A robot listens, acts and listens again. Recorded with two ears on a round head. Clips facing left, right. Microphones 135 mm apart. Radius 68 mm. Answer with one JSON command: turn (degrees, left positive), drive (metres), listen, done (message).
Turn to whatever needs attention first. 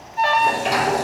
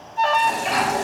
{"turn": 30}
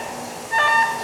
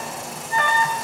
{"turn": 140}
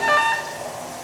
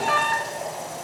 {"turn": 60}
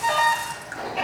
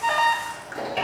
{"turn": 10}
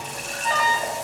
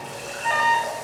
{"done": "Facing the alarm, under 1 m away."}